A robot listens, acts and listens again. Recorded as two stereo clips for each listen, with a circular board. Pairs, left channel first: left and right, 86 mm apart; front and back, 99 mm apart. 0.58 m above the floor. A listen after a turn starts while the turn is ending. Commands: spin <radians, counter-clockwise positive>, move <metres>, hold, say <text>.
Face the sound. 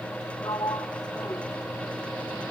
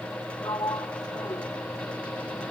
spin 0.87
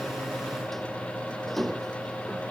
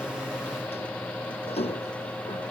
say Found it: a sliding door, straight ahead.